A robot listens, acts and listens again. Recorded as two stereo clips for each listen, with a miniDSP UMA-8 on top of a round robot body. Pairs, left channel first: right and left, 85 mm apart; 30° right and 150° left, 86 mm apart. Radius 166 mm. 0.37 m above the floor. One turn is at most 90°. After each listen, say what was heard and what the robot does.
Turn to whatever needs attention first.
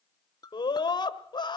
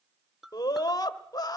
The scream: 70° right. Turn 70° right.
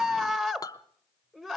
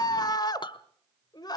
Facing the scream, 1 to 2 m away.